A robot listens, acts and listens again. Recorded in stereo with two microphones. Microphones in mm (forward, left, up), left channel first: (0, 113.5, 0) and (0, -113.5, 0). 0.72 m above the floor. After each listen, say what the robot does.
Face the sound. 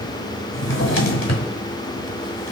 Turn 60° left.
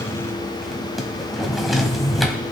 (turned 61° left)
Facing the drawer, 1 to 2 m away.